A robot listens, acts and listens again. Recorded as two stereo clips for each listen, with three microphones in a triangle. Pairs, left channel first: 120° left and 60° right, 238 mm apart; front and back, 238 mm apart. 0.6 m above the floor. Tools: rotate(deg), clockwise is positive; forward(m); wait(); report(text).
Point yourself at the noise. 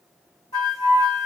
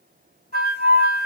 rotate(-45)
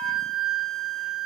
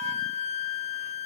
rotate(-10)
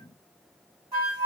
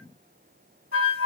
report("Facing the flute, 2 to 4 m away.")